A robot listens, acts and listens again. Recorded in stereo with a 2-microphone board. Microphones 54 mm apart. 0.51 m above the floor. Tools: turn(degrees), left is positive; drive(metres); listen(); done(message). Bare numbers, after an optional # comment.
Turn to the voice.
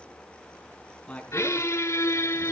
# The man speaking: about 20° left or 160° left.
turn(20)
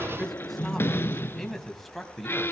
turn(30)
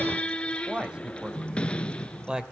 # So it is at 15° right.
turn(-15)
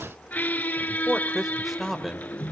done("Found it: a man speaking, straight ahead.")